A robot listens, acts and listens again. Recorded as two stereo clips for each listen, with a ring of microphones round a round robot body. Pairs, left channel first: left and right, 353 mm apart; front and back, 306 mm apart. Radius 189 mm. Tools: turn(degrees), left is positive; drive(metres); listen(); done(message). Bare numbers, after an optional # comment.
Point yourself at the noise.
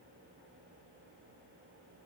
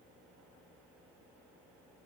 listen()
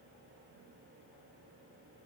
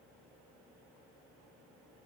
listen()
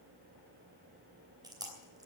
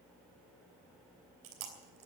# The chewing: 170° right.
turn(-170)
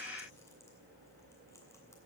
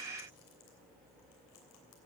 listen()
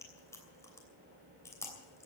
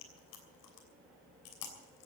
# The chewing is now 10° left.
turn(10)
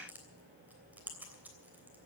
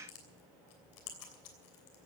done("Found it: chewing, straight ahead, 2 to 4 m away.")